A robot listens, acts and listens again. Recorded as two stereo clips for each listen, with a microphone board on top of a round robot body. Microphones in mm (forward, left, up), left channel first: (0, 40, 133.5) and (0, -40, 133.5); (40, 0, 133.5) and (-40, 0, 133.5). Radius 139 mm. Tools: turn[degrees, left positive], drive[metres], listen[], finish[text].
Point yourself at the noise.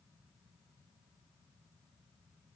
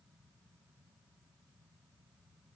Action: listen[]
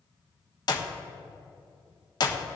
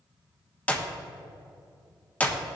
Thought: The clap: 70° left.
Action: turn[70]
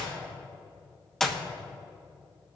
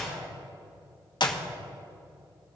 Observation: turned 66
Action: finish[Found it: a clap, straight ahead.]